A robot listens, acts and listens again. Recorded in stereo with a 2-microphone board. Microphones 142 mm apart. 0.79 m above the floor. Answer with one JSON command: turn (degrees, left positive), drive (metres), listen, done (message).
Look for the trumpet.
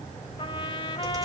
{"turn": 35}
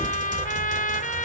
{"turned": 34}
{"turn": 110}
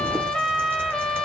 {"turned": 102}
{"done": "Found it: a trumpet, straight ahead, 1 to 2 m away."}